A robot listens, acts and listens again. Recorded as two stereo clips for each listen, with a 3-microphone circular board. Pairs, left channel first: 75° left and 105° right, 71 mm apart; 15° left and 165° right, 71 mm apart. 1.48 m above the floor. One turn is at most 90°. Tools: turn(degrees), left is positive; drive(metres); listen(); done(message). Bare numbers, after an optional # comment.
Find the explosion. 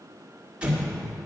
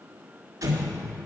# The explosion: 175° right.
turn(-90)
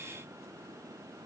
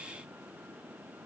# Nothing new. It was at 85° right.
turn(-85)
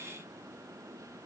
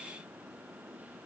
done("I heard an explosion from this way, but can't make it out now.")